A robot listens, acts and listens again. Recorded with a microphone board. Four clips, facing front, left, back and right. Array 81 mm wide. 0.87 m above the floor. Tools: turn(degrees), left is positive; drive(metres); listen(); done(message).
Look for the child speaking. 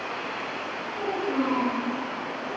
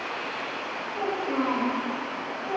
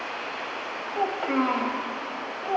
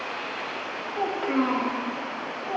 turn(degrees=-170)
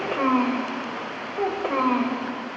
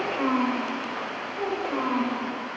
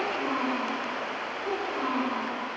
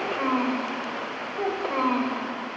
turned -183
turn(degrees=-30)
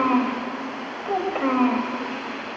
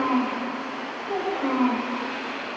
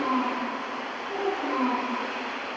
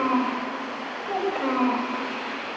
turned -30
turn(degrees=-15)
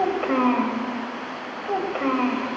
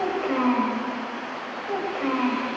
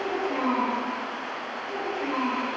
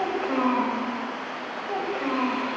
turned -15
done("Found it: a child speaking, straight ahead.")